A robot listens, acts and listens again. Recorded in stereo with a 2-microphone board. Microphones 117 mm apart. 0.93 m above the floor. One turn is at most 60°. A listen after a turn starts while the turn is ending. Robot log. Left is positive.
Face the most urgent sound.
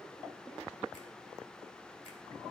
cmd idle
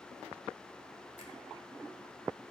cmd idle
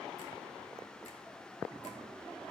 end: I can't make out anything urgent to turn to.